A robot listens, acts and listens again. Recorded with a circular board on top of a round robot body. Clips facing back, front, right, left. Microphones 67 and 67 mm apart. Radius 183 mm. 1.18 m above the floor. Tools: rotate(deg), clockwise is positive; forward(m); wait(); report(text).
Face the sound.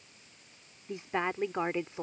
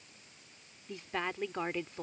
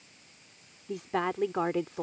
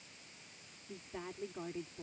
rotate(105)
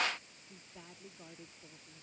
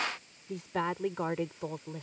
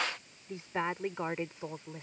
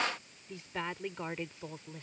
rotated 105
rotate(20)
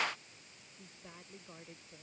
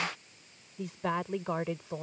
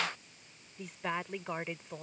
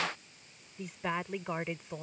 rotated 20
report("Facing the woman speaking.")